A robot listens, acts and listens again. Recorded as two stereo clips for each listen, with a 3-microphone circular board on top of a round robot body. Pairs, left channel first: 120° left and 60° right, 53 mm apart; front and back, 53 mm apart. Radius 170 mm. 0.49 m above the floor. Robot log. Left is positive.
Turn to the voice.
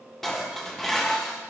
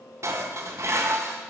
cmd idle
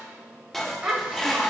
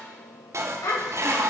note: The child speaking: 10° left.
cmd yaw +10
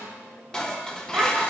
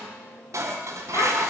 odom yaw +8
end: Found it: a child speaking, straight ahead, 2 to 4 m away.